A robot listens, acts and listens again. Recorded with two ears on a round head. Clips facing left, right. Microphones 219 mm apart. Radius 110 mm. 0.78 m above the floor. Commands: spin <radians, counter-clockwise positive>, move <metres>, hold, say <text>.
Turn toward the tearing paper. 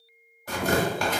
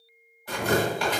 spin 0.70
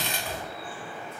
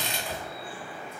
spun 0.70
spin 1.66
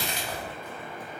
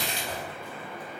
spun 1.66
say Facing the tearing paper.